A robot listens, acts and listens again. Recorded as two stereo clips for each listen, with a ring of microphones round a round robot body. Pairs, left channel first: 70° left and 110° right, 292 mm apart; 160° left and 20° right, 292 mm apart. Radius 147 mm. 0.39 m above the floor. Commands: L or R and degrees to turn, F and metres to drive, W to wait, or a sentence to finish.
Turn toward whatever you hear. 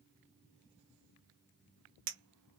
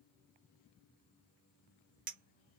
R80
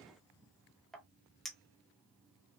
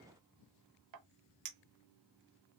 R20
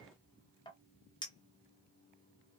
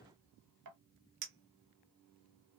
Found it: a clink, straight ahead, under 1 m away.